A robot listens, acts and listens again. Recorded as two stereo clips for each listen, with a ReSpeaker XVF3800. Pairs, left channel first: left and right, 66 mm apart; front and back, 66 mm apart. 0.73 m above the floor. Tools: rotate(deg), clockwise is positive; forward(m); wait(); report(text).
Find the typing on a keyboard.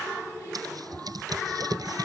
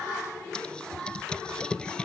rotate(75)
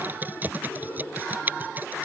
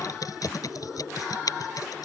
rotate(30)
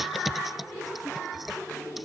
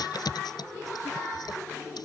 report("Found it: typing on a keyboard, straight ahead.")